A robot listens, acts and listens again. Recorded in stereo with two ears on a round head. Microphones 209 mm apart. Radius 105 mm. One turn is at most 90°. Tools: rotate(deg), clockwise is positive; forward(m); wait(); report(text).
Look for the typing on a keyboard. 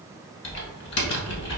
rotate(-55)
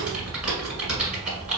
report("Facing the typing on a keyboard.")